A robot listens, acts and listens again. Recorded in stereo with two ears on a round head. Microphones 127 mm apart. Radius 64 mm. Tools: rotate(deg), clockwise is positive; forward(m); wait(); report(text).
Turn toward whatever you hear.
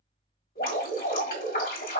rotate(-70)
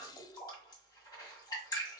rotate(-30)
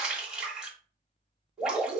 report("Facing the dripping.")